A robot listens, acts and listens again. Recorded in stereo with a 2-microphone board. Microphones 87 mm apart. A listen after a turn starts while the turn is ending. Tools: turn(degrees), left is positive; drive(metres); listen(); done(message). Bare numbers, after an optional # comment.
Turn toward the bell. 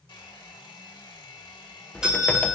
turn(-30)
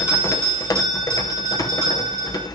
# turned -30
# So it is at 140° right.
turn(-140)
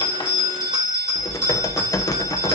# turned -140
# The bell is now 60° right.
turn(-60)
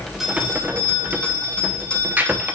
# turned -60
# The bell is now 10° left.
turn(10)
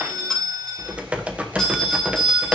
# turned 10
done("Facing the bell, 2 to 4 m away.")